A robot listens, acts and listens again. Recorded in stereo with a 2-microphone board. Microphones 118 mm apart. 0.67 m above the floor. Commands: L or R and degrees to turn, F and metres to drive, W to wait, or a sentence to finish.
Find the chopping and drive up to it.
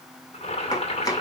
L35
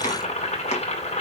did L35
L110
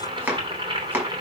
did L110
R15
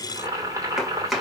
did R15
F1.0
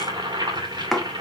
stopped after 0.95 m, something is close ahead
Arrived at the chopping, straight ahead.